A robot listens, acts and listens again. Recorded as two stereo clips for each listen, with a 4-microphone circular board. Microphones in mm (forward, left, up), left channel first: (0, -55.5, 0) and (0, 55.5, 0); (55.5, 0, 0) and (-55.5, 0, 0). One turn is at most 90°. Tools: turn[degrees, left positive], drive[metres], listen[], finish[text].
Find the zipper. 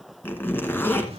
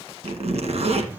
Thought: The zipper: 160° right.
Action: turn[-90]
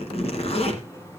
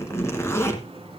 Thought: The zipper is now 65° right.
Action: turn[-65]
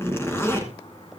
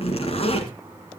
Thought: The zipper is now 20° right.
Action: turn[-20]
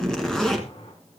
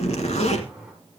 Action: finish[Facing the zipper, 1 to 2 m away.]